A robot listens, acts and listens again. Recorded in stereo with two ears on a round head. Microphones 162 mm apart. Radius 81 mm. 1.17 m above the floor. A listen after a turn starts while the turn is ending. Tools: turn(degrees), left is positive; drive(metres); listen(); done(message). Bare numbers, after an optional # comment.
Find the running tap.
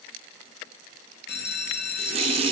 # The running tap: about 30° right or 150° right.
turn(-30)
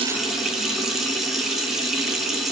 done("Found it: a running tap, straight ahead, under 1 m away.")